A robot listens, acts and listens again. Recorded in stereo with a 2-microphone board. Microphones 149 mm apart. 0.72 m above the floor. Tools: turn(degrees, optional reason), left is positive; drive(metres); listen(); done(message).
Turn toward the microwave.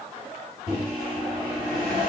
turn(degrees=65, reason="The microwave: about 65° left or 115° left.")
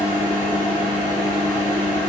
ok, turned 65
turn(degrees=45, reason="So it is at 45° left.")
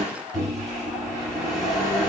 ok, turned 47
done("Facing the microwave.")